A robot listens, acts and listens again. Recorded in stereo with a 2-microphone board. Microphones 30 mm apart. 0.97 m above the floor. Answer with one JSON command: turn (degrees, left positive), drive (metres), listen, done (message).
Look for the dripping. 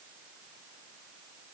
{"listen": true}
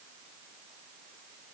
{"listen": true}
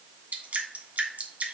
{"turn": -60}
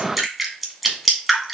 {"done": "Facing the dripping."}